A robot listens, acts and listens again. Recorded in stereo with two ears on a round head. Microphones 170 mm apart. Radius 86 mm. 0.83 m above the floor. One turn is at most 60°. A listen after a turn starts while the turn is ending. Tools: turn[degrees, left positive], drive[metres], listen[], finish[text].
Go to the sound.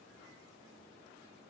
Action: listen[]
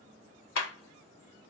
Action: turn[60]
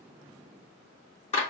Thought: So it is at 35° left.
Action: turn[35]
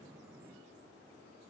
Action: listen[]
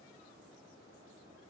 Thought: The clap is now 20° right.
Action: turn[-20]
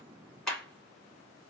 Action: drive[1.0]
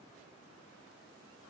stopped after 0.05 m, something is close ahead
Action: listen[]
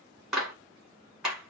Action: finish[Something is in my way. I am facing the clap but have not reached it.]